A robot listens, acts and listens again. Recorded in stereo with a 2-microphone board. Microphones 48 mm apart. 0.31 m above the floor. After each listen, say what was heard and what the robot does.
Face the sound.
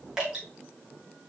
Turn 30° right.
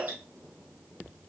Keep listening.
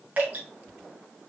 So it is at 140° right. Turn 140° right.
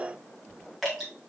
Facing the dripping, 2 to 4 m away.